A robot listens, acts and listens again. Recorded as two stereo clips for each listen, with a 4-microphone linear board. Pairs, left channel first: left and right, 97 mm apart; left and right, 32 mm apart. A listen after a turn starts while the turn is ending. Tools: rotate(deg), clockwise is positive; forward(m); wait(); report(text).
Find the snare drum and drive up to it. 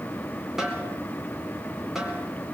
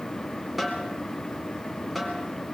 rotate(30)
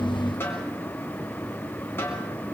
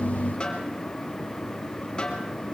rotate(-25)
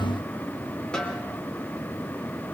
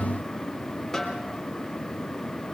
rotate(-10)
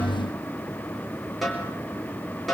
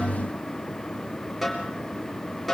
forward(1.0)
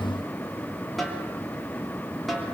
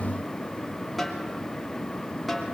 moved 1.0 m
forward(1.0)
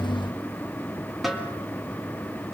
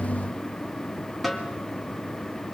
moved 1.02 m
forward(1.0)
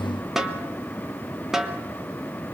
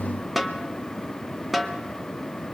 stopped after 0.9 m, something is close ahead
report("Arrived at the snare drum, straight ahead.")